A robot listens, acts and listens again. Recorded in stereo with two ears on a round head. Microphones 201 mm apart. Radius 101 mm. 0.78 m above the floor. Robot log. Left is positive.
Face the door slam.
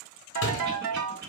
note: The door slam: about 65° left or 115° left.
cmd yaw +65
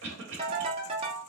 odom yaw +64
cmd idle
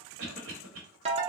end: I heard a door slam, but can't make it out now. It was about straight ahead or 55° left.